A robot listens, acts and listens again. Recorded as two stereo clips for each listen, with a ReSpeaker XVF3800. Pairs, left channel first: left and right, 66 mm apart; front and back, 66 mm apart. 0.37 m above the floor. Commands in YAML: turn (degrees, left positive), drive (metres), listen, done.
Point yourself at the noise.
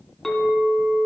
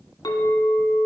done: "Facing the clink, 1 to 2 m away."